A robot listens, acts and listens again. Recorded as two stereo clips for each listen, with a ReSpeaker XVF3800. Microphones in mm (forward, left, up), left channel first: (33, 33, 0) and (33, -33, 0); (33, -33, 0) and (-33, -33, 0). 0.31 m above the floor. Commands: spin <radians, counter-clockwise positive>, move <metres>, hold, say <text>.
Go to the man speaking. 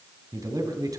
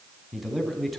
spin -1.57
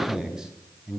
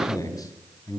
spin -0.17
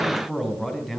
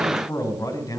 move 1.0
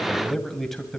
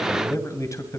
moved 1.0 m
move 1.0
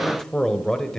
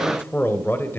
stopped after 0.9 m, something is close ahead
spin 0.26
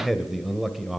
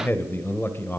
say Arrived at the man speaking, straight ahead.